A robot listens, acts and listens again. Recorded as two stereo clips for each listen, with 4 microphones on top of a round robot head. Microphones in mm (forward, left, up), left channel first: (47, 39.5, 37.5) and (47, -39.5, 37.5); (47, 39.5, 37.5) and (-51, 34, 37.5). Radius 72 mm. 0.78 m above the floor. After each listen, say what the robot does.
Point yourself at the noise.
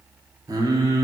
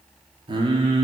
Turn 135° right.
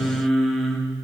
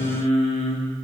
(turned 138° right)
Facing the singing, 1 to 2 m away.